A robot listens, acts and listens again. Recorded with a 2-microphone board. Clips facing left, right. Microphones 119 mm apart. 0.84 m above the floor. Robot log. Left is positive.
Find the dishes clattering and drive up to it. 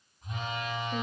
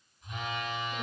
cmd idle
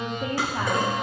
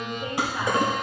note: The dishes clattering: about 15° right or 165° right.
cmd yaw -15
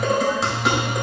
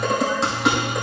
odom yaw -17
cmd fwd 1.0
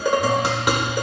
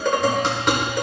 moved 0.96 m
note: The dishes clattering is now 10° left.
cmd yaw +10
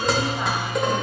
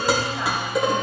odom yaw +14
cmd fwd 1.0
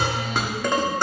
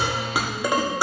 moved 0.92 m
note: The dishes clattering is now 10° right.
cmd yaw -10
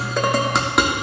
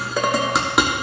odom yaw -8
cmd fwd 1.0
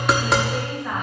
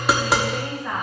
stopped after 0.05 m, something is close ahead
end: I am next to the dishes clattering.